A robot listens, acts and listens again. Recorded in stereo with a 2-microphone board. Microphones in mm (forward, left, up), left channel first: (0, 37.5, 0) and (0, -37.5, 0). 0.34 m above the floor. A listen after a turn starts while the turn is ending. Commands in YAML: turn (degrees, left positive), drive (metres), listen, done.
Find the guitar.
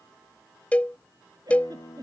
turn: 65
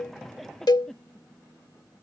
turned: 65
listen: true
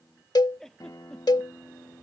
turn: 50
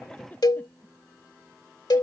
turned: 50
turn: 35
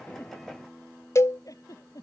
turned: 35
done: "Found it: a guitar, straight ahead."